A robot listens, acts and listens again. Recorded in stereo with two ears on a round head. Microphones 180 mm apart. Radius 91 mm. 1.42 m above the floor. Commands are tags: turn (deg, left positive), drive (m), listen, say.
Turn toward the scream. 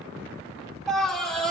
<turn deg="30"/>
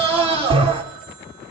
<turn deg="-30"/>
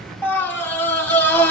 <turn deg="10"/>
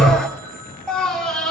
<say>Facing the scream, 2 to 4 m away.</say>